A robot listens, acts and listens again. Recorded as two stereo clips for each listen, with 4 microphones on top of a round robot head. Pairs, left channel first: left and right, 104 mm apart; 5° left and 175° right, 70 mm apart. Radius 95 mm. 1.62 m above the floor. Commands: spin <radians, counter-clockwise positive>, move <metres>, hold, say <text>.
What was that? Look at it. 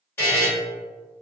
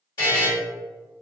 spin 0.35
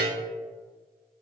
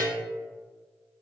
hold
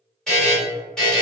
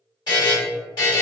say Found it: a buzzer, straight ahead.